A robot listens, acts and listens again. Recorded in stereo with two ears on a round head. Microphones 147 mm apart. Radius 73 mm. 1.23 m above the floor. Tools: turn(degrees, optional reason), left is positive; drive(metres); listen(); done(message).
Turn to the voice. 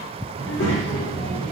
turn(degrees=90)
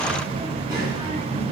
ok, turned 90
turn(degrees=-30, reason="So it is at 30° right.")
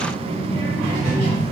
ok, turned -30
turn(degrees=-10, reason="The child speaking is now 10° right.")
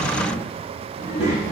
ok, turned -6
turn(degrees=-10, reason="The child speaking is now 10° right.")
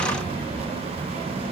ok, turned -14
done("Facing the child speaking.")